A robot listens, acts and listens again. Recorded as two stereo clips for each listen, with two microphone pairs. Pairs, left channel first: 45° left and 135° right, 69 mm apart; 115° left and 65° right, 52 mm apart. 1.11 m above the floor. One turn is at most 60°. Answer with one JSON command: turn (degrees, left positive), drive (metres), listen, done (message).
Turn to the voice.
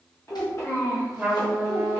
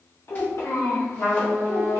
{"turn": 60}
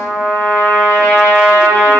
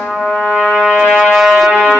{"turn": 30}
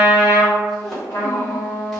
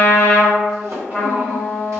{"listen": true}
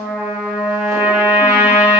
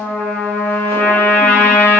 {"done": "I heard a child speaking from this way, but can't make it out now."}